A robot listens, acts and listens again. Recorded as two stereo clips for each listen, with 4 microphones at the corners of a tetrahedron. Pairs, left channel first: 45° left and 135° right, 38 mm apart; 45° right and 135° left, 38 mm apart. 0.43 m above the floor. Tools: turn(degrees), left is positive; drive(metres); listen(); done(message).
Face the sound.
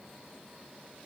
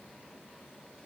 listen()
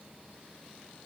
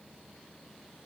listen()
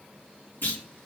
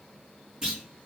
turn(degrees=60)
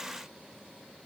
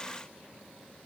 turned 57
done("Facing where the clunk came from. I can't hear it now.")